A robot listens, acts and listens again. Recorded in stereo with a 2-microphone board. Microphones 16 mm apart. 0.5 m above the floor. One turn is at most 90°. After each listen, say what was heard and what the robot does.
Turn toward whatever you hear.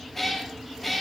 Turn 30° left.
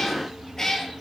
So it is at 155° left. Turn 90° left.
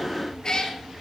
The cat meowing is now 50° left. Turn 50° left.
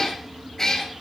The cat meowing is now 30° left. Turn 30° left.
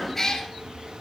The cat meowing is now 25° left. Turn 25° left.
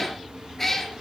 The cat meowing is now 20° left. Turn 20° left.
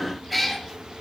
Found it: a cat meowing, straight ahead.